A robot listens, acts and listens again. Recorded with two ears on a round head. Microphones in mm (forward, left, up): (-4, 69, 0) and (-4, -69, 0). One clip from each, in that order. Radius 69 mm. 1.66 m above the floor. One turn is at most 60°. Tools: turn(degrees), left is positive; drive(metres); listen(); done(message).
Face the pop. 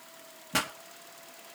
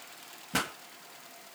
turn(degrees=30)
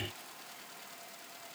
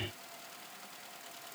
listen()
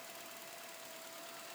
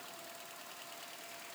done("I heard a pop, but can't make it out now. It was about 25° right or 145° left.")